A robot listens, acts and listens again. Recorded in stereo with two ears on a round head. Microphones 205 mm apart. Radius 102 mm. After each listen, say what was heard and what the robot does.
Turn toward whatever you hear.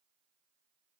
Keep listening.
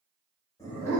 Turn 30° left.
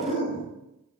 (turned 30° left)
So it is at 145° left. Turn 145° left.
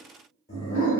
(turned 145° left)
The dog barking is now 40° left. Turn 40° left.
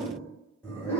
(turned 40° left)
The dog barking is now 15° left. Turn 15° left.
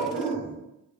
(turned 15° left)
Found it: a dog barking, straight ahead, 1 to 2 m away.